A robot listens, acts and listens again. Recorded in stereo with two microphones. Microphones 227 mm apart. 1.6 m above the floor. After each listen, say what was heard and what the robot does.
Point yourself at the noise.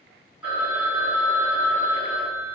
Turn 30° right.
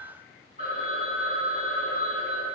So it is at 145° right. Turn 145° right.
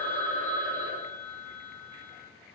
The phone ringing is now 25° right. Turn 25° right.
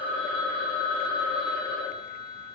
Facing the phone ringing.